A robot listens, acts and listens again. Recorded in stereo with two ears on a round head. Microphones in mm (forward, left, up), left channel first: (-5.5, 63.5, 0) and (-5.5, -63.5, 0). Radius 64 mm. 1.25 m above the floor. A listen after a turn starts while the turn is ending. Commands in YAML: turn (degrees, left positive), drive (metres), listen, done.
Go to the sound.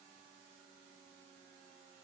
listen: true
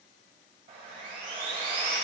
turn: -45
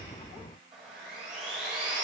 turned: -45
drive: 1.0
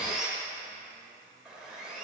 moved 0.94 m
drive: 1.0
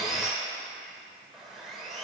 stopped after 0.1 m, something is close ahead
done: "Arrived at the sawing, straight ahead."